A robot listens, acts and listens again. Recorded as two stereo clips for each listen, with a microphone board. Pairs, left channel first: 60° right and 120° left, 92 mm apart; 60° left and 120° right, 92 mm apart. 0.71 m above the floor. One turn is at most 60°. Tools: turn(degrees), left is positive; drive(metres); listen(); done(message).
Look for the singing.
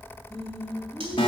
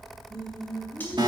turn(degrees=-60)
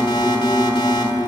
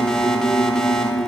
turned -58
turn(degrees=-60)
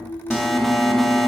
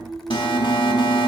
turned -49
turn(degrees=-35)
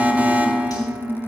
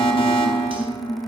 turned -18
turn(degrees=-15)
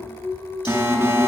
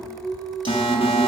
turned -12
done("Found it: singing, straight ahead.")